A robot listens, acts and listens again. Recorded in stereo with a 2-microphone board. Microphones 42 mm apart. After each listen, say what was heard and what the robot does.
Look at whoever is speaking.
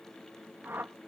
Keep listening.
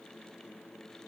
Keep listening.
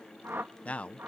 The man speaking: about 35° left or 145° left. Turn 35° left.
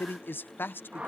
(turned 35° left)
So it is at 100° left. Turn 100° left.
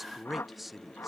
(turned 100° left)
Found it: a man speaking, straight ahead.